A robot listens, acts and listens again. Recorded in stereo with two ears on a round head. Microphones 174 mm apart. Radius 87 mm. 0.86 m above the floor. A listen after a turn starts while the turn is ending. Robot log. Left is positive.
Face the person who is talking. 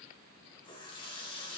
cmd idle
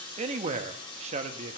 note: The man speaking: about 35° right or 145° right.
cmd yaw -35
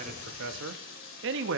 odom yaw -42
note: So it is at 100° right.
cmd yaw -100
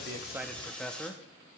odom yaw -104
end: Facing the man speaking.